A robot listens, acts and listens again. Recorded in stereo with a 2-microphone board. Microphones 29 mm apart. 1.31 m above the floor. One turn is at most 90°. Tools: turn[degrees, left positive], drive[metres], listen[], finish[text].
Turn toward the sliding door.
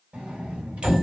Thought: The sliding door: about 50° right or 130° right.
Action: turn[-50]
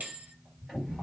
Thought: So it is at 10° right.
Action: turn[-10]
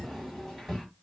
Action: finish[Found it: a sliding door, straight ahead.]